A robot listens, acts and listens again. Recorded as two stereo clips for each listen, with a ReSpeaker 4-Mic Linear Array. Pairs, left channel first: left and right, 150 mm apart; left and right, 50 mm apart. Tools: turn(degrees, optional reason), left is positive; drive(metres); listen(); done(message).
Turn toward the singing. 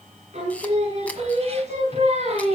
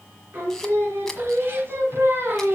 turn(degrees=-45, reason="The singing: about 45° right or 135° right.")
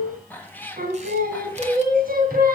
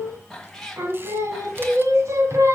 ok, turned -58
turn(degrees=-75, reason="So it is at 75° right.")
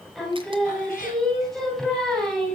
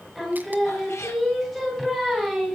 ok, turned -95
done("Facing the singing, 2 to 4 m away.")